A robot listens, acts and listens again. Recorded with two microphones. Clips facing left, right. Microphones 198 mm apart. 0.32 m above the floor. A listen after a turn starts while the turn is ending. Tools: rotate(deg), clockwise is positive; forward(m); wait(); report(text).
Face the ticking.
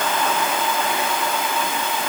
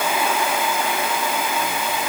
wait()
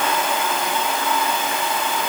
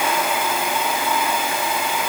wait()
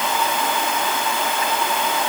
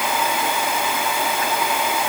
report("I can't make out ticking.")